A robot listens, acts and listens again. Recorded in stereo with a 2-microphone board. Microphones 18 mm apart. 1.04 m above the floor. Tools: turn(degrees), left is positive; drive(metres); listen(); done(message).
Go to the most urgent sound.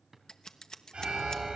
turn(degrees=-90)
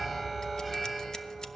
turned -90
drive(metres=1.0)
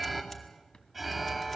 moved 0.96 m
drive(metres=1.0)
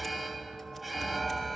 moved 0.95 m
drive(metres=1.0)
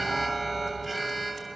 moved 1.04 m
drive(metres=1.0)
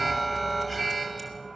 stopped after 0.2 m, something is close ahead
done("Arrived at the alarm, straight ahead.")